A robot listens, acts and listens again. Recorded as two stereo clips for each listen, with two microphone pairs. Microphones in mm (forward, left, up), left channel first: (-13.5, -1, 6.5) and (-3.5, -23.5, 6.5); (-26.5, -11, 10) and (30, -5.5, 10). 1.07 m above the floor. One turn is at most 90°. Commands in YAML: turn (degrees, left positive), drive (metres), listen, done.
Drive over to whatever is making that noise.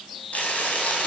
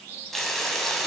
turn: 90
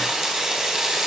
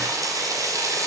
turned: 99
drive: 1.0
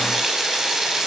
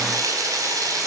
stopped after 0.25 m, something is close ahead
done: "Blocked. The frying is further on, straight ahead."